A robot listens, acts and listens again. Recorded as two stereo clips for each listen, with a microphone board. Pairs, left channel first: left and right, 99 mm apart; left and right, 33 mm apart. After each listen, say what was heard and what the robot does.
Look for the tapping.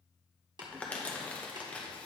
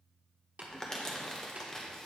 The tapping: about 50° right or 130° right. Turn 50° right.
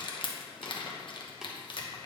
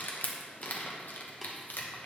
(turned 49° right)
Keep listening.
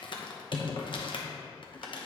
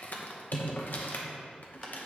Keep listening.
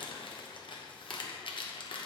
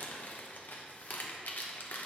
I heard tapping, but can't make it out now. It was about straight ahead or 85° right.